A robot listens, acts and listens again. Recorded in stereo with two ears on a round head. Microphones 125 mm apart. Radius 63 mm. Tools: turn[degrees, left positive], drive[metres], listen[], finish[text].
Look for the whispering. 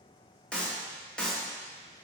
Action: listen[]
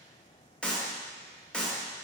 Action: listen[]
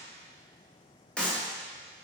Action: finish[I can't make out whispering to turn to.]